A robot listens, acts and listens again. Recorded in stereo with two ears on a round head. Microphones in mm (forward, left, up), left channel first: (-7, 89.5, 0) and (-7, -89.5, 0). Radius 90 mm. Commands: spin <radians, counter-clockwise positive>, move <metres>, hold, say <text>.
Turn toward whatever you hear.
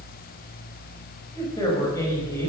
spin 0.26
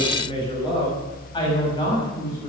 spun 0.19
spin 0.35
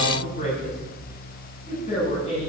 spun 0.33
spin 0.61
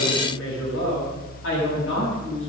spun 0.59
spin 1.92
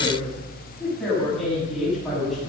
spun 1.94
say Found it: a woman speaking, straight ahead.